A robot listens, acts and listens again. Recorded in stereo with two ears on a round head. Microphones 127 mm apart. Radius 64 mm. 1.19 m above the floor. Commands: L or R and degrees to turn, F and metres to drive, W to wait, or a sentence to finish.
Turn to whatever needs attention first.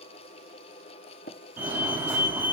R15
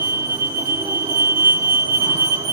R150
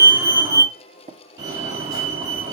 R25
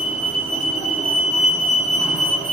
R10
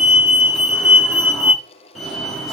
Facing the fire alarm.